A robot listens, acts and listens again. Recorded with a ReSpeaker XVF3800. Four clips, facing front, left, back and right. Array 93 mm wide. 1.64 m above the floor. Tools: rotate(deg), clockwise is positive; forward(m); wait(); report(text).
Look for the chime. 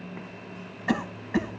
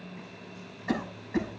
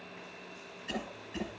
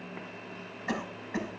wait()
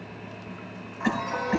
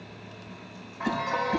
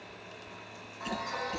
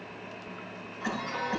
rotate(-65)
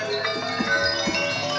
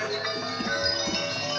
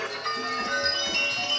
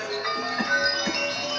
report("Found it: a chime, straight ahead.")